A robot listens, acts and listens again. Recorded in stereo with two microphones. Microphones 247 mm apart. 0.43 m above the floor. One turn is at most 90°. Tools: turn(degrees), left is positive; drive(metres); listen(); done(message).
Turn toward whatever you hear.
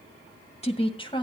turn(degrees=20)
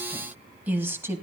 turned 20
turn(degrees=-10)
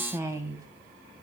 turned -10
turn(degrees=-15)
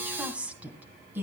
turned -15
turn(degrees=-10)
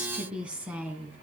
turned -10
turn(degrees=-10)
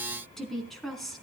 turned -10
done("Facing the woman speaking, 2 to 4 m away.")